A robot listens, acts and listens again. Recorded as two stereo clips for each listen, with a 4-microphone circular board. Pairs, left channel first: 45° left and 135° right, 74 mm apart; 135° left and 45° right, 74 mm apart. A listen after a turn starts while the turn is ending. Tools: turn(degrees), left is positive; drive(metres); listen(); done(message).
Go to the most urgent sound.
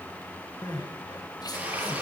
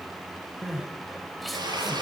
turn(degrees=45)
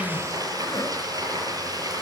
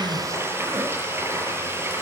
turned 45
drive(metres=1.0)
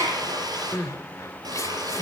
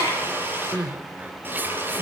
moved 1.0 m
turn(degrees=15)
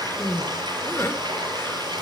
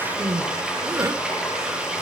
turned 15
drive(metres=1.0)
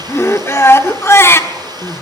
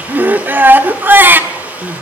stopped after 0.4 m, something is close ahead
done("I am next to the crying.")